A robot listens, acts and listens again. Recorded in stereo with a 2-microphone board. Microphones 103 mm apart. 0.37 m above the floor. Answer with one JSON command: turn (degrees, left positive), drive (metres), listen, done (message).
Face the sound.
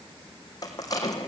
{"turn": 35}
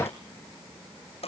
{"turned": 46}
{"turn": 100}
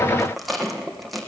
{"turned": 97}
{"done": "Found it: a rattle, straight ahead."}